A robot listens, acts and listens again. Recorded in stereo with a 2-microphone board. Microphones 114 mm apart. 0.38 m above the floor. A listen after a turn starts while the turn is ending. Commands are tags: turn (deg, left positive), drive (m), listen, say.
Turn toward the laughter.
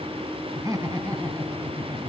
<turn deg="-30"/>
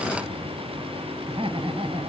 <turn deg="-125"/>
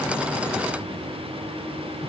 <listen/>
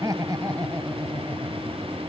<turn deg="-35"/>
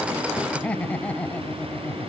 <turn deg="10"/>
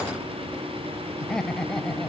<say>Found it: laughter, straight ahead.</say>